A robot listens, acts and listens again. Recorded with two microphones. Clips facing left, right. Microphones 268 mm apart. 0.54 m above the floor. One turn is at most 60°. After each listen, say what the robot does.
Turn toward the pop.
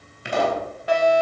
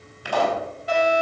Turn 25° left.
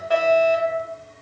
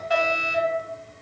Keep listening.
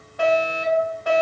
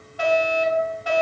I heard a pop, but can't make it out now. It was about straight ahead or 130° left.